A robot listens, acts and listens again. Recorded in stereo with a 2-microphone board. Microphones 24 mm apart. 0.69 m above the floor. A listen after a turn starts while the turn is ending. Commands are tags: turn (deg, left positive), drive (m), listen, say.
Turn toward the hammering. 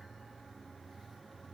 <listen/>
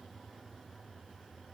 <listen/>
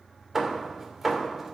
<turn deg="-30"/>
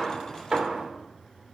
<turn deg="-130"/>
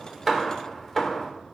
<turn deg="20"/>
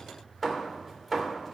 <turn deg="10"/>
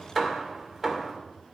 <say>Found it: hammering, straight ahead.</say>